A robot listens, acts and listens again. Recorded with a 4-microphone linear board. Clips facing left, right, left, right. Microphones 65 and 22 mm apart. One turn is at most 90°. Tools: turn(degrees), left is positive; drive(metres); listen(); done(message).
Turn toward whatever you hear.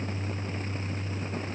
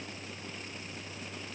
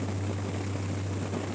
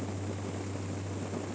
listen()
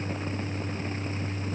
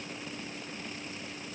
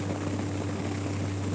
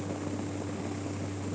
listen()
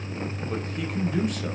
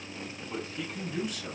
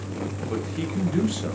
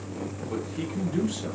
turn(degrees=50)
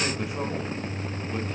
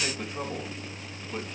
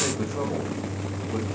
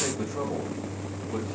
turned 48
listen()
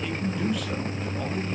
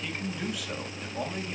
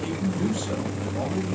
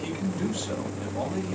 done("Found it: a man speaking, straight ahead, 2 to 4 m away.")